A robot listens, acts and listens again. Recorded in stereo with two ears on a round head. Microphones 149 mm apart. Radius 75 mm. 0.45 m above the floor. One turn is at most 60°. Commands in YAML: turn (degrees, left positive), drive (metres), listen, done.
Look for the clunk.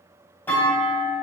turn: 30
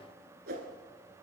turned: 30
listen: true
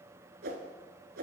done: "I heard a clunk, but can't make it out now. It was about 20° right or 140° left."